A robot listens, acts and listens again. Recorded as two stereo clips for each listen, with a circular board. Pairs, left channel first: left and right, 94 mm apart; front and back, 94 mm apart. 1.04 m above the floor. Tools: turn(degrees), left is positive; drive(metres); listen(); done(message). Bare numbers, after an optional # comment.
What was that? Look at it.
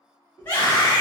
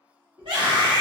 # The scream: 155° left.
turn(155)
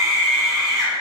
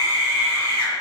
done("Facing the scream, 1 to 2 m away.")